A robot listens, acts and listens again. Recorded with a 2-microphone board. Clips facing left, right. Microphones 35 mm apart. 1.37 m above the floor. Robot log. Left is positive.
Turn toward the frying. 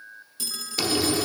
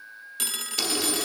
note: The frying: about 15° left or 165° left.
cmd yaw +15
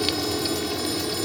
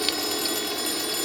end: Found it: frying, straight ahead.